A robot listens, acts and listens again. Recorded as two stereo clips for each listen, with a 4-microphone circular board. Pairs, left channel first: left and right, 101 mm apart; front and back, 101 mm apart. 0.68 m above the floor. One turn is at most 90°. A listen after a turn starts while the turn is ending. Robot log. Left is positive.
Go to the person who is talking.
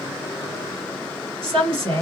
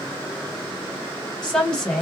note: The woman speaking: 80° right.
cmd yaw -80
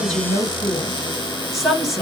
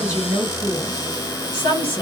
cmd fwd 1.0
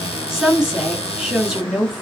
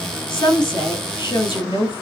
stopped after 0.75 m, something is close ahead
end: I am next to the woman speaking.